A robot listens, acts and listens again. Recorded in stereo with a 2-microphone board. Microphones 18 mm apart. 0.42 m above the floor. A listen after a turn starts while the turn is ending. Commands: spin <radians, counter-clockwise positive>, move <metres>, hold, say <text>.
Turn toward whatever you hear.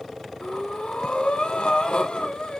spin 1.57
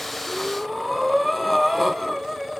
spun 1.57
say Found it: breathing, straight ahead, 1 to 2 m away.